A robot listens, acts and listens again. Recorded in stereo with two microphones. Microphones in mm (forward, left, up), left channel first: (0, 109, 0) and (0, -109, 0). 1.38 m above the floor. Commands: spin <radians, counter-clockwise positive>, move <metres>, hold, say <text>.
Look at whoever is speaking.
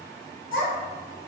spin 1.22
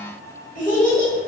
spin 0.70
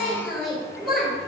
say Facing the child speaking.